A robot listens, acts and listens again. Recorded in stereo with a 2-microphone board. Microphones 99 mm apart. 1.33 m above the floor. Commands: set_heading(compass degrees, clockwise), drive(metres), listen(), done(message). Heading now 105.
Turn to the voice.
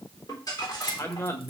set_heading(80)
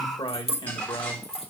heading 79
set_heading(314)
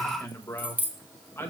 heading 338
set_heading(313)
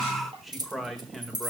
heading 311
done("Found it: a man speaking, straight ahead.")